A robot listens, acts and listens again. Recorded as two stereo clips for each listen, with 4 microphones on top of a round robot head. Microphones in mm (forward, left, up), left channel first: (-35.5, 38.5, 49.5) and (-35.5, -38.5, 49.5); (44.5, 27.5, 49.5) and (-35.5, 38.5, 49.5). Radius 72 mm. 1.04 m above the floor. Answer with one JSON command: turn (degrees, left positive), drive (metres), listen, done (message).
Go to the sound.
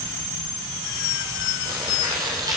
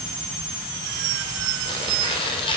{"turn": -35}
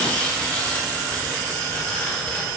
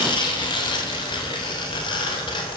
{"turn": 15}
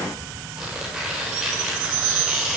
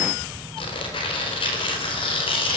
{"drive": 1.0}
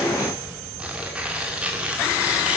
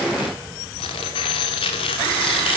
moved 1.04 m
{"turn": -10}
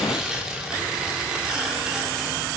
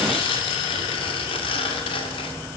{"drive": 1.0}
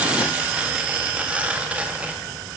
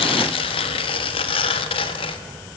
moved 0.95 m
{"turn": -10}
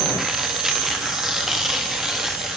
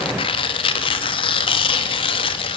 {"drive": 1.0}
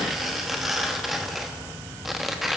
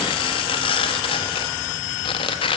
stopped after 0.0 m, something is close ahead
{"done": "I am next to the tearing paper."}